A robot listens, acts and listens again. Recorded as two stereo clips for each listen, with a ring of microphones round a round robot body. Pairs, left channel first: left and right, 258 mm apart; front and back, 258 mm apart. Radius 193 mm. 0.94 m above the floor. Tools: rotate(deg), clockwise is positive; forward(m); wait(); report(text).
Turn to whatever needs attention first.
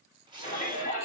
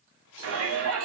rotate(-160)
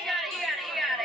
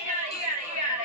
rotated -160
report("Facing the shout.")